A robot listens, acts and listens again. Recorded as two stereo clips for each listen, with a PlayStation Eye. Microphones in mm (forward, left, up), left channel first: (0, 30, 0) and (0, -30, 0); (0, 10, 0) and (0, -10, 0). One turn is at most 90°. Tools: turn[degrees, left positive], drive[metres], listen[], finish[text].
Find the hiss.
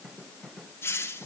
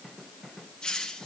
Thought: The hiss: about 40° left or 140° left.
Action: turn[40]
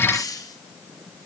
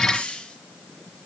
Thought: So it is at 100° left.
Action: turn[90]
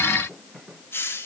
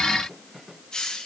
Thought: The hiss is now 40° left.
Action: turn[40]
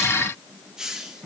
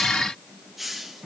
Thought: The hiss is now 10° right.
Action: turn[-10]
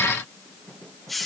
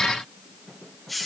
Action: finish[Found it: a hiss, straight ahead, 2 to 4 m away.]